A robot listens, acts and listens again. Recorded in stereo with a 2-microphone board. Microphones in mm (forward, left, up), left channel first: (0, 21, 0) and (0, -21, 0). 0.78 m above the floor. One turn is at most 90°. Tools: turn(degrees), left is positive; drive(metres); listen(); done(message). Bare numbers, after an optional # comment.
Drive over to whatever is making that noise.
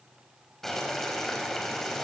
turn(30)
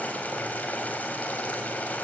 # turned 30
# So it is at 140° left.
turn(90)
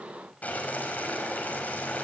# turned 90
# The boiling is now 40° left.
turn(40)
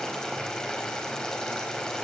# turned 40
# The boiling is now 15° left.
turn(15)
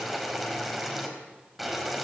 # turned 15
drive(1.0)
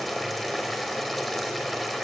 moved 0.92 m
drive(1.0)
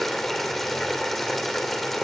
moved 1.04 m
drive(1.0)
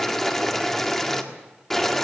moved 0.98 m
# The boiling is now 10° left.
turn(10)
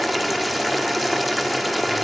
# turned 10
drive(1.0)
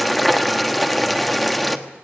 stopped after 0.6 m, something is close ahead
done("I am next to the boiling.")